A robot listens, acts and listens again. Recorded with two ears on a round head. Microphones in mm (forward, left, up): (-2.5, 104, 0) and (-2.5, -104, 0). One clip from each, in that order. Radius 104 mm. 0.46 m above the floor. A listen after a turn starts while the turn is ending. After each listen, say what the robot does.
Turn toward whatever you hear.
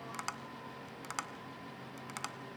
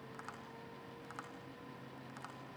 Turn 65° left.
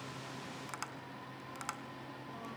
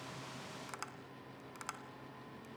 Facing the tapping, 2 to 4 m away.